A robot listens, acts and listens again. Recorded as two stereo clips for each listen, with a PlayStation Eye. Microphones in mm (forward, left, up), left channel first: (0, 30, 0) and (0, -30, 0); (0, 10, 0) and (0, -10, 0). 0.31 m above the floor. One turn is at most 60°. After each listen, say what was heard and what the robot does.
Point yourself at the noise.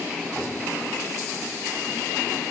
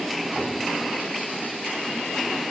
Keep listening.
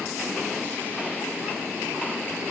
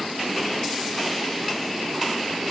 Keep listening.
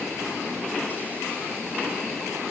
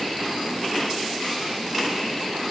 I can't make out anything to turn to.